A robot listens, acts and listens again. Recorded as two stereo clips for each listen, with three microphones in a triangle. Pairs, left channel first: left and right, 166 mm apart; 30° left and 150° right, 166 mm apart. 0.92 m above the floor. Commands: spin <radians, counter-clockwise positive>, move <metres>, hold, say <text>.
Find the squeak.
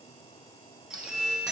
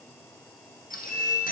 say Found it: a squeak, straight ahead.